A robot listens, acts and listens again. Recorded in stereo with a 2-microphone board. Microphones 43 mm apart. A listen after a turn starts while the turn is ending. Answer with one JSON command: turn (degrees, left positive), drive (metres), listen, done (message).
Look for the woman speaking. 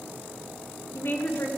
{"turn": 55}
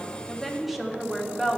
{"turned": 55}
{"done": "Facing the woman speaking, under 1 m away."}